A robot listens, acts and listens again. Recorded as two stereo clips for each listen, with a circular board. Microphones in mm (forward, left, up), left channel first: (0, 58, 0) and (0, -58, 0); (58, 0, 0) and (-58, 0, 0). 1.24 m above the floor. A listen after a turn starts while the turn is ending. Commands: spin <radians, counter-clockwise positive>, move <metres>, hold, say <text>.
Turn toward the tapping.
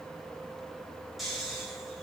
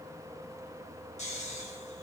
hold
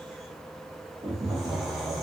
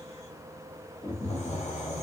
spin -0.70
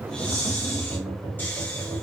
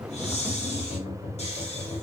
spin -0.35
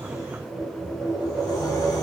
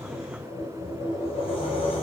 say Found it: tapping, straight ahead, 1 to 2 m away.